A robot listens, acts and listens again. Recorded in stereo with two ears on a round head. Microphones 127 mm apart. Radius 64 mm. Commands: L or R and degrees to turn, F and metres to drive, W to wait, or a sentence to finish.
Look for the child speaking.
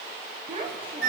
R40
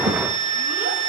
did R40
W
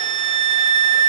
W
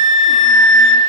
I heard a child speaking, but can't make it out now. It was about straight ahead or 100° right.